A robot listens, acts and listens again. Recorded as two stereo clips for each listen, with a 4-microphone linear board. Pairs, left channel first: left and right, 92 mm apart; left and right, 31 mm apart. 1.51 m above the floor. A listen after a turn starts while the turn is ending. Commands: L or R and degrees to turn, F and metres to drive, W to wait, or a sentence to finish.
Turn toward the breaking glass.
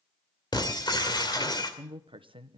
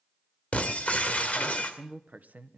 L50
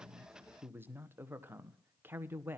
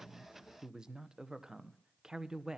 W
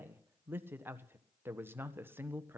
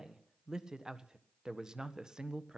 I heard breaking glass, but can't make it out now. It was about straight ahead or 80° left.